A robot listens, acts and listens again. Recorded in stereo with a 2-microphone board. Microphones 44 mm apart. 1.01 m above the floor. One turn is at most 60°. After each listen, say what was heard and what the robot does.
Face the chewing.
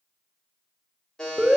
Keep listening.
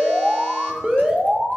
Keep listening.
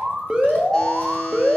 I can't make out chewing to turn to.